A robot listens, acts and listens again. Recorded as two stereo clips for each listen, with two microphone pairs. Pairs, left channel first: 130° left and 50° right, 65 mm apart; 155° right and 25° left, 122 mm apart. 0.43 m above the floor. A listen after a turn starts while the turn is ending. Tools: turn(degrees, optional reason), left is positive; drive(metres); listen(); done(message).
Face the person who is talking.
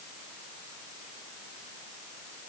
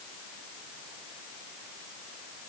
listen()
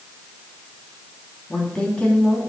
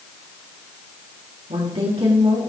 turn(degrees=55, reason="The woman speaking: 55° left.")
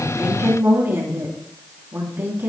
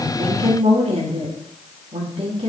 done("Found it: a woman speaking, straight ahead, 2 to 4 m away.")